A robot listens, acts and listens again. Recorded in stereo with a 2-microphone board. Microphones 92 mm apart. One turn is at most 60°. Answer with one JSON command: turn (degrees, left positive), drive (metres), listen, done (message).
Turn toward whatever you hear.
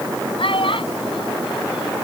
{"turn": 60}
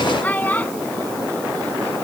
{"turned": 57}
{"turn": 20}
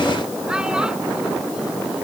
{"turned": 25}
{"listen": true}
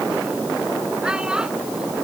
{"turn": -10}
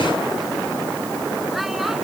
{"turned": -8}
{"listen": true}
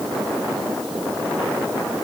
{"listen": true}
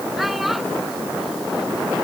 {"done": "I heard a child speaking from this way, but can't make it out now."}